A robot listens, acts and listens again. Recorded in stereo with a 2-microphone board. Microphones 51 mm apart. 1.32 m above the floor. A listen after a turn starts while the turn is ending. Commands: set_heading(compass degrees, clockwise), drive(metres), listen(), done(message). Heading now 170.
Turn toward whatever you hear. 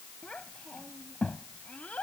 set_heading(145)
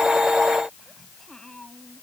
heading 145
set_heading(135)
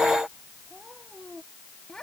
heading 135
set_heading(125)
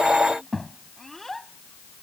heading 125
done("Facing the child speaking.")